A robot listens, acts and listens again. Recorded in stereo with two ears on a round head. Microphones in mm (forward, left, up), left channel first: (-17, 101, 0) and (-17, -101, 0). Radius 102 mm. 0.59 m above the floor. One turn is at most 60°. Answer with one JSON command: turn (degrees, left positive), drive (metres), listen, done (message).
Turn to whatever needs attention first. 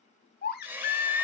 {"turn": 40}
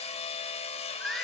{"done": "Found it: a baby crying, straight ahead."}